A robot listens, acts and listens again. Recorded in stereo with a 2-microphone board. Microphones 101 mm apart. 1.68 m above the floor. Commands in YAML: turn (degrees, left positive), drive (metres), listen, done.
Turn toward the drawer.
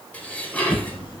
turn: 50
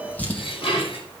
turn: 20
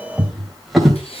done: "Facing the drawer."